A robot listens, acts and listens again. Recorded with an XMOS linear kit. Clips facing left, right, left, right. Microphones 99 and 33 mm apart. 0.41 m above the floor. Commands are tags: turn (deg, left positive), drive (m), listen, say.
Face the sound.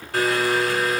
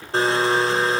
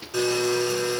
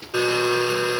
<turn deg="-25"/>
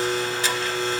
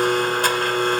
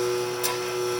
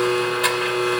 <turn deg="-130"/>
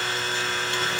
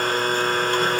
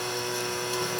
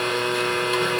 <turn deg="-45"/>
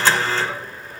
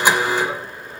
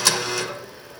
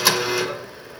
<turn deg="-15"/>
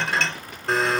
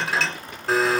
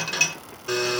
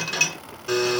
<say>Found it: a blender, straight ahead.</say>